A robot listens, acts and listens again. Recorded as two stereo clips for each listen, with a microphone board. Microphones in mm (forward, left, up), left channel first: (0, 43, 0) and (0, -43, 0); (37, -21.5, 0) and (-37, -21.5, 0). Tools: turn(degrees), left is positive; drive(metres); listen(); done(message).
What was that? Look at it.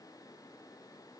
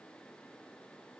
listen()
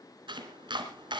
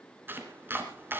turn(degrees=-115)
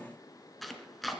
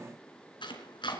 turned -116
done("Found it: chopping, straight ahead, 2 to 4 m away.")